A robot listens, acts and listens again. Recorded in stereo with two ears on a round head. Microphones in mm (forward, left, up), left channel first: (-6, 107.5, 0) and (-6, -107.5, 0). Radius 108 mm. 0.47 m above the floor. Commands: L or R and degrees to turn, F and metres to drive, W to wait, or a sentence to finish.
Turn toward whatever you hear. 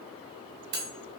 R45
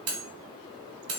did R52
R75
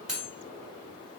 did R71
Facing the cutlery clinking.